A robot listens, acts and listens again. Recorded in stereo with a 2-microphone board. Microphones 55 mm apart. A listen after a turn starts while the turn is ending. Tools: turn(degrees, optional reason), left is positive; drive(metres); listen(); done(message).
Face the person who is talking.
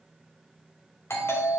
listen()
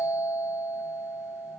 listen()
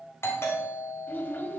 turn(degrees=35, reason="The child speaking: about 35° left or 145° left.")
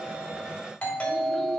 listen()
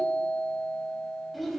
done("Facing the child speaking.")